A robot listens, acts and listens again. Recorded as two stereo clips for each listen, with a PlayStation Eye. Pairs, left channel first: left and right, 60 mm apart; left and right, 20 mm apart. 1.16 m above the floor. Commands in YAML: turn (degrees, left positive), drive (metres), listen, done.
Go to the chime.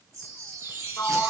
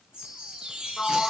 turn: -90
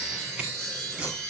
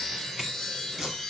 turn: 15
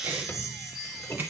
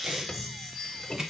drive: 1.0
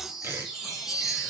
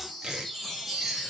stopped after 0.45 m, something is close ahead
done: "Something is in my way. I am facing the chime but have not reached it."